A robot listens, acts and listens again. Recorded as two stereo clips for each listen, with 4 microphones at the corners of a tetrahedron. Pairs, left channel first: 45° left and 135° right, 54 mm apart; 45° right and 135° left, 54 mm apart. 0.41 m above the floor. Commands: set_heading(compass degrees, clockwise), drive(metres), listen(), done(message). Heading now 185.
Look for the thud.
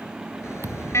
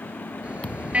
set_heading(295)
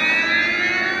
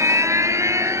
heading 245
set_heading(295)
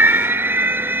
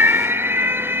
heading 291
done("Facing where the thud came from. I can't hear it now.")